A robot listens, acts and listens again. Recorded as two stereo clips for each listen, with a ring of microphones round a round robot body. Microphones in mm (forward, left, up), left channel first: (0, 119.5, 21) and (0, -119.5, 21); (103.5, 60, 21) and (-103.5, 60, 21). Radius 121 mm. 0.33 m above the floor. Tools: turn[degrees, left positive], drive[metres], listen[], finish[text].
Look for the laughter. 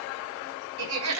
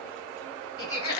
Thought: The laughter: 75° right.
Action: turn[-75]
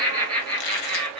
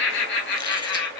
Action: finish[Found it: laughter, straight ahead, 2 to 4 m away.]